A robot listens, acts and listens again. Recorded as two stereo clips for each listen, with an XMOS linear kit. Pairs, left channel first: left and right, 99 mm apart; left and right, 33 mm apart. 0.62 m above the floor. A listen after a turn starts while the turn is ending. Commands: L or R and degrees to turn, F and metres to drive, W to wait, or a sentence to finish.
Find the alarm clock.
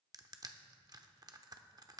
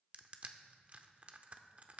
W
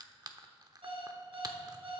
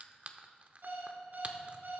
R65
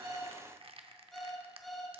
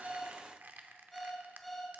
Facing the alarm clock, 2 to 4 m away.